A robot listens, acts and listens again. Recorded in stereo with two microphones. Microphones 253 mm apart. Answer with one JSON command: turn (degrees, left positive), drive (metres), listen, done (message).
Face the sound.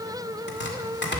{"turn": 45}
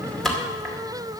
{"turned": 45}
{"done": "Found it: chopping, straight ahead, 2 to 4 m away."}